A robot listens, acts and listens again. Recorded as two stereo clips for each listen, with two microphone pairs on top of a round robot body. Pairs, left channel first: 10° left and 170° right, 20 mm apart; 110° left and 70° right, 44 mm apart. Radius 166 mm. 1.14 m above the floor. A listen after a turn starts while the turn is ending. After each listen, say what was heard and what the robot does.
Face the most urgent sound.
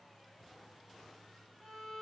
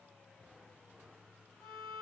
Keep listening.
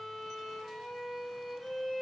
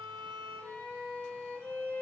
Keep listening.
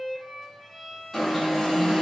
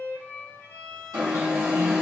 The alarm: 70° right. Turn 70° right.
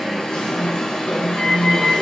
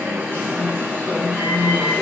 Found it: an alarm, straight ahead, 1 to 2 m away.